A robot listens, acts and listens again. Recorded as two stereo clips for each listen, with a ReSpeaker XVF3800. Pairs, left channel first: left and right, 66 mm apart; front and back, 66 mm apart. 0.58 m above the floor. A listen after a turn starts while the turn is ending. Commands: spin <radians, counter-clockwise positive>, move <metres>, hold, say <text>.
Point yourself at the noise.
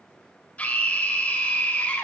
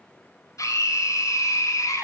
spin 0.44
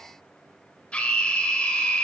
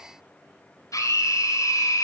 spin 0.35
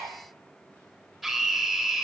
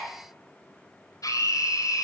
say Found it: a scream, straight ahead.